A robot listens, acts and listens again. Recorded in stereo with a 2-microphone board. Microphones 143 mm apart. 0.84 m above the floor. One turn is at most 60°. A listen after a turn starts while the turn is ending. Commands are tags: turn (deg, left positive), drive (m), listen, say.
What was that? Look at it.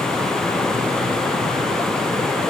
<listen/>
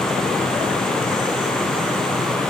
<listen/>
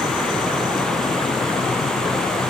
<say>I can't make out anything.</say>